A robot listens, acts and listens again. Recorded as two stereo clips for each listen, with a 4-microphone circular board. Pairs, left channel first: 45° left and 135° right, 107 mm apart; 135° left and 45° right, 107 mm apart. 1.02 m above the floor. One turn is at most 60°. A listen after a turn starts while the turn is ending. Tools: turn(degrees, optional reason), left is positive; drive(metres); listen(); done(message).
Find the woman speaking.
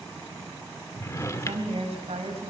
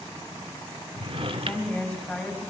turn(degrees=-60, reason="The woman speaking: 150° right.")
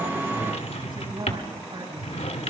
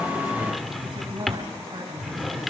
turn(degrees=-60, reason="The woman speaking is now 95° right.")
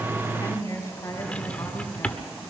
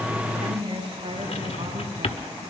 turn(degrees=-20, reason="The woman speaking is now 20° right.")
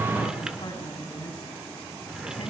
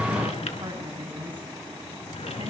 done("Facing the woman speaking, over 4 m away.")